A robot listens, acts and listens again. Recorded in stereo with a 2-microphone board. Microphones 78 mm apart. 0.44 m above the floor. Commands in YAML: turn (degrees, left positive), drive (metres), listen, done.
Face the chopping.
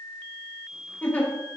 listen: true
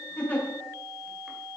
listen: true
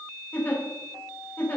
done: "I can't make out chopping, only a giggle."